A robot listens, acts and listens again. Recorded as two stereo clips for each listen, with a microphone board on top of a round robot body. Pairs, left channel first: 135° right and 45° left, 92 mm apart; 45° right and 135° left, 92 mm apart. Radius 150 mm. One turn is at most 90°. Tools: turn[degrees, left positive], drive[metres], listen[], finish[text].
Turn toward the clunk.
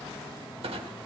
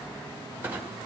Thought: The clunk: 65° left.
Action: turn[65]
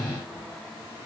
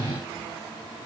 Action: finish[I heard a clunk from this way, but can't make it out now.]